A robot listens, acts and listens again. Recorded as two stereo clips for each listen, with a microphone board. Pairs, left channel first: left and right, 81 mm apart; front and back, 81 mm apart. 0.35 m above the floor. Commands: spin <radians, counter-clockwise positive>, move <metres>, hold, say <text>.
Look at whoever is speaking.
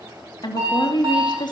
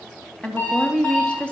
spin 1.31
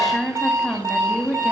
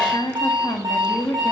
say Facing the woman speaking, 2 to 4 m away.